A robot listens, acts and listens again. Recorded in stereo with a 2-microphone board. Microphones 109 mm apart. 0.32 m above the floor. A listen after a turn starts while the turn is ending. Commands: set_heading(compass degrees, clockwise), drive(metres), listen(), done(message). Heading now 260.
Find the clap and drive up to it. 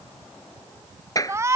set_heading(225)
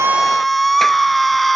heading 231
listen()
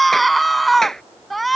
drive(1.0)
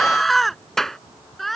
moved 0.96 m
drive(1.0)
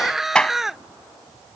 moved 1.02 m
set_heading(221)
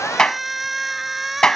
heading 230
drive(1.0)
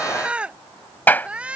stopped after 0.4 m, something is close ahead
set_heading(210)
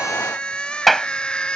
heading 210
done("I am next to the clap.")